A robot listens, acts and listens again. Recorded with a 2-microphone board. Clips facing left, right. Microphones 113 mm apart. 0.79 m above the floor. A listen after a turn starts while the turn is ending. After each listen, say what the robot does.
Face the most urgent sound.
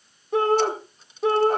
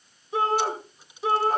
Turn 55° left.
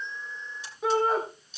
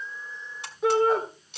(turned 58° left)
Facing the shout.